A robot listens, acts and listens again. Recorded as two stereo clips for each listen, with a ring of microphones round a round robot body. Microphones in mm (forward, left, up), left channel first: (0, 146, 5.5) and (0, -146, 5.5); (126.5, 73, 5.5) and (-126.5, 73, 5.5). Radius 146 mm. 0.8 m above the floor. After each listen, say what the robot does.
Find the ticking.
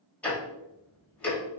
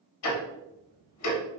Found it: ticking, straight ahead.